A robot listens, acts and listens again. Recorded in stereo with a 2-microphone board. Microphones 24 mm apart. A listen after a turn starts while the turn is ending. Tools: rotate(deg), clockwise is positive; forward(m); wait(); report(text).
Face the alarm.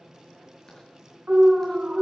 rotate(50)
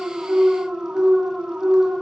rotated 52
rotate(75)
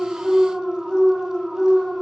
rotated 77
report("Found it: an alarm, straight ahead, over 4 m away.")